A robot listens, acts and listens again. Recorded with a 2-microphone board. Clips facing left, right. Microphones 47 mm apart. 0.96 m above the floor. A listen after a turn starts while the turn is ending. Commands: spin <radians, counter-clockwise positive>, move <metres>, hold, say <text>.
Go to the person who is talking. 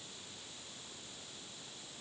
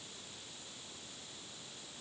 hold
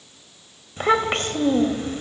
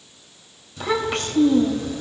spin 0.70
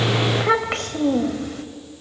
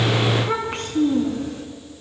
spin 1.75
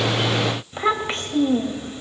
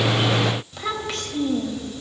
spin 0.52
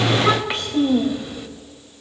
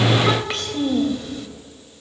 spin 0.17
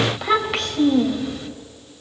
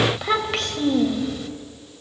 move 1.0
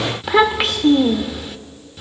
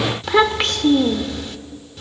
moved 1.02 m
move 1.0
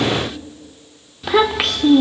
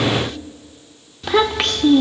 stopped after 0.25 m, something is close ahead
say I am next to the child speaking.